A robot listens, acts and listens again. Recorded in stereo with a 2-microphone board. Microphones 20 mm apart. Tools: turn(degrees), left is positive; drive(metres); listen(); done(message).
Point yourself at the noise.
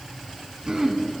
turn(degrees=-30)
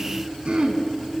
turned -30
turn(degrees=-115)
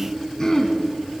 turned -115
turn(degrees=30)
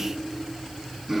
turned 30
turn(degrees=-15)
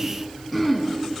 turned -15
done("Found it: throat clearing, straight ahead, 1 to 2 m away.")